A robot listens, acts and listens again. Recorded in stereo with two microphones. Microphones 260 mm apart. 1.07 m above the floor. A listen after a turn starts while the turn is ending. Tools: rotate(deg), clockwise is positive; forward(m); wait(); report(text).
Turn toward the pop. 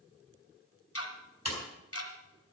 rotate(75)
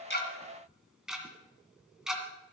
wait()
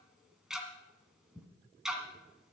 report("I heard a pop, but can't make it out now. It was about straight ahead or 30° right.")